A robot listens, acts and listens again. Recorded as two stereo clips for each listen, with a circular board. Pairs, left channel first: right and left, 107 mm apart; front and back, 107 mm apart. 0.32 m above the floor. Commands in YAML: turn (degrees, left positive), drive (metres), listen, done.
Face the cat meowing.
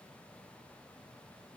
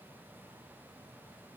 listen: true
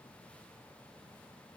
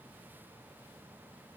listen: true
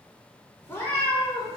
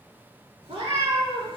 turn: -145
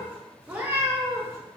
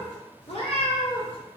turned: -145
turn: 25
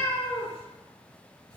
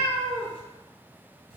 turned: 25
turn: -20
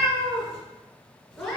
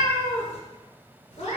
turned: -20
done: "Facing the cat meowing."